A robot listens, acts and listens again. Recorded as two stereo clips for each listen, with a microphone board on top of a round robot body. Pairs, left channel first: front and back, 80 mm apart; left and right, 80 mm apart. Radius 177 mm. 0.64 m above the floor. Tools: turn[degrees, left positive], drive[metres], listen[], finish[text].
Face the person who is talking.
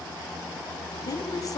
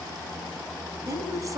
Thought: The woman speaking: 45° right.
Action: turn[-45]
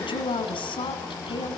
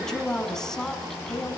Action: finish[Facing the woman speaking, over 4 m away.]